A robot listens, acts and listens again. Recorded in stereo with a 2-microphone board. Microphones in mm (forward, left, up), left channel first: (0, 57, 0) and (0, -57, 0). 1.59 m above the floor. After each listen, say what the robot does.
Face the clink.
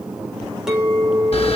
Turn 30° right.
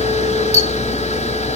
Keep listening.
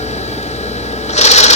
Keep listening.
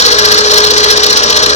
I heard a clink, but can't make it out now. It was about 25° left or 145° right.